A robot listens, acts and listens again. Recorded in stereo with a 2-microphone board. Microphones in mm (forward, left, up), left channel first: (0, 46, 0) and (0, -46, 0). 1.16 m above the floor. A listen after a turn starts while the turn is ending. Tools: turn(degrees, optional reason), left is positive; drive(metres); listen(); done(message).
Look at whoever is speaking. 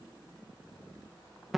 listen()
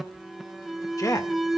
turn(degrees=45, reason="The man speaking: about 45° left or 135° left.")
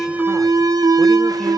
listen()
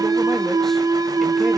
listen()
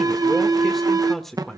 done("Facing the man speaking, 1 to 2 m away.")